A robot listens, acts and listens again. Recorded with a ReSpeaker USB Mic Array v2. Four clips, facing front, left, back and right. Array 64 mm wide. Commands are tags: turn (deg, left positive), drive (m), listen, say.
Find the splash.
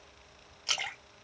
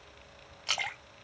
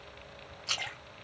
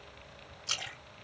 <turn deg="70"/>
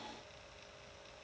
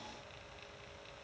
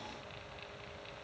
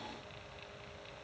<say>I heard a splash from this way, but can't make it out now.</say>